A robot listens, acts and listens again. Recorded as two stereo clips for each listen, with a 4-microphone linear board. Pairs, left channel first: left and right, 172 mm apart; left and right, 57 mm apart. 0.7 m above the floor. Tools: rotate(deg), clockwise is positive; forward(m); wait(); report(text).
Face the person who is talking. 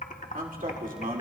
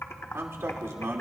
rotate(55)
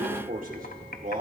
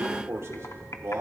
rotate(60)
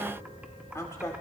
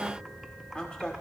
rotate(-20)
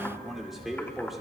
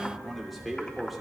report("Facing the man speaking, 2 to 4 m away.")